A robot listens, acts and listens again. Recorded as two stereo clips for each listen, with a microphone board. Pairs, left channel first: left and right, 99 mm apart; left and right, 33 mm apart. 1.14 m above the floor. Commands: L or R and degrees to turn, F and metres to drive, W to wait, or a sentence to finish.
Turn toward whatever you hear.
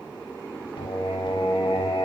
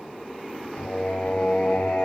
L60
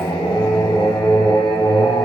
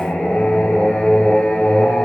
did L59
L60
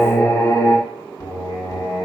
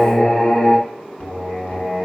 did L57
L40
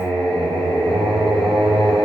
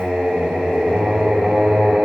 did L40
Found it: singing, straight ahead.